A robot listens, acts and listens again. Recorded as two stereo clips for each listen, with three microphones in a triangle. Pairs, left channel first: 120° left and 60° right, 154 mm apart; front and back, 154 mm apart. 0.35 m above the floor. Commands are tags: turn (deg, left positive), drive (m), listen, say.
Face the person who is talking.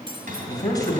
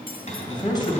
<turn deg="55"/>
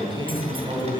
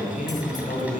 <say>Found it: a man speaking, straight ahead.</say>